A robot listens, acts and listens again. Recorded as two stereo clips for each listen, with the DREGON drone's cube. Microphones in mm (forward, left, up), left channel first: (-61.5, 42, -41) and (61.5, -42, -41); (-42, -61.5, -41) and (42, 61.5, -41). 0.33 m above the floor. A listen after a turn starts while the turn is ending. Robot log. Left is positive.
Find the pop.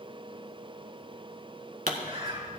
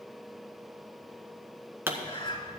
note: The pop: 20° right.
cmd yaw -20
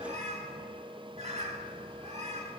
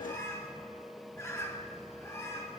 end: I heard a pop from this way, but can't make it out now.